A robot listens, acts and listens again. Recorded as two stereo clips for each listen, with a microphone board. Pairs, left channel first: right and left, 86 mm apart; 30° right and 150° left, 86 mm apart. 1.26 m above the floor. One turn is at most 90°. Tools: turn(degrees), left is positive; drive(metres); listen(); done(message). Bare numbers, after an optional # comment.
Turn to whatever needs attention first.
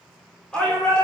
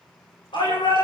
# The shout: 10° right.
turn(-10)
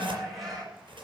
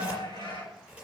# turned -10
done("Found it: a shout, straight ahead.")